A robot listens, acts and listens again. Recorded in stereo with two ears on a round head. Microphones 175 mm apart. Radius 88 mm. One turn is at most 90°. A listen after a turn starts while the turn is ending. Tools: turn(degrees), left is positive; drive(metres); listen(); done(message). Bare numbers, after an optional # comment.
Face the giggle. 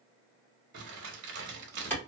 listen()
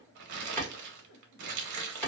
# The giggle: about 55° left or 125° left.
turn(55)
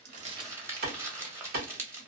listen()
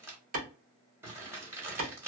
listen()
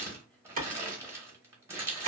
done("I heard a giggle, but can't make it out now. It was about straight ahead or 70° left.")